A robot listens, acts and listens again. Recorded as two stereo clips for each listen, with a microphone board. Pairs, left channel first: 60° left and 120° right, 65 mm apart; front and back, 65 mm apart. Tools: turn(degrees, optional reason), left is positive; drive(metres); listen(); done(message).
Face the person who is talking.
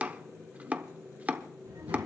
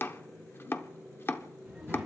turn(degrees=-100, reason="The child speaking: 100° right.")
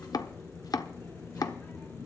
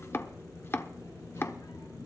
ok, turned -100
done("Facing the child speaking, over 4 m away.")